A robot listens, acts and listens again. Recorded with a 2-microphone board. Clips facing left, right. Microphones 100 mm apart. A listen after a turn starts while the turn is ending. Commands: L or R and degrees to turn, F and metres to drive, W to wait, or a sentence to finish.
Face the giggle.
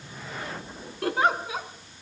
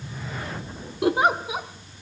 R15
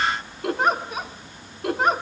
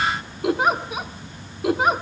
Facing the giggle, 1 to 2 m away.